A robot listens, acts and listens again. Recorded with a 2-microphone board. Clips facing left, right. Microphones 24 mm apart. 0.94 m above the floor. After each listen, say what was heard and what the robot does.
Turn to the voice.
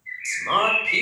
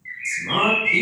The man speaking: about 45° left or 135° left. Turn 45° left.
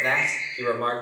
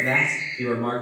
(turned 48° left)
So it is at 80° left. Turn 80° left.
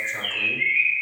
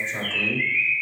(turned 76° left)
Keep listening.
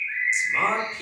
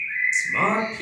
Facing the man speaking.